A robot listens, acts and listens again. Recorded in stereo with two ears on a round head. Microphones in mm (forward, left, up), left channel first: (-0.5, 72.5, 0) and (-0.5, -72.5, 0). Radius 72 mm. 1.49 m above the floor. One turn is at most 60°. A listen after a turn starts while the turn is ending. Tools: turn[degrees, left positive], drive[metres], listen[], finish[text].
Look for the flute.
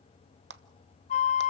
Thought: The flute: about 45° left or 135° left.
Action: turn[45]
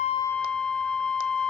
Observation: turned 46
Action: finish[Facing the flute, under 1 m away.]